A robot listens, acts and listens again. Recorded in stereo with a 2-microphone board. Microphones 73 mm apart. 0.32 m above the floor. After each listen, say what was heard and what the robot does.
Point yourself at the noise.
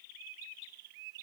Keep listening.
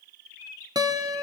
The guitar: about 75° right or 105° right. Turn 75° right.
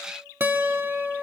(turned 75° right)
So it is at 30° right. Turn 30° right.
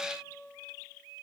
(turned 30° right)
The guitar is now 10° right. Turn 10° right.
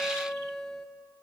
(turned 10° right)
Found it: a guitar, straight ahead.